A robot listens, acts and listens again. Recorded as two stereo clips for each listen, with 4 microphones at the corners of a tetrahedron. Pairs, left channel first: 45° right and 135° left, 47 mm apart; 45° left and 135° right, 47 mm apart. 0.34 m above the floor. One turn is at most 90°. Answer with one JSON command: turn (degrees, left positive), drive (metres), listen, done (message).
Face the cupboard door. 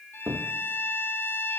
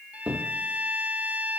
{"turn": 90}
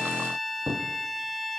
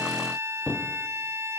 {"turn": 90}
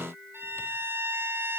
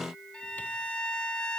{"turn": 10}
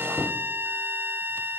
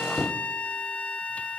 {"turn": -15}
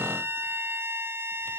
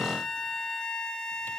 {"listen": true}
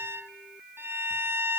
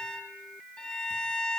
{"listen": true}
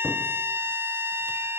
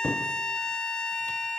{"done": "I heard a cupboard door from this way, but can't make it out now."}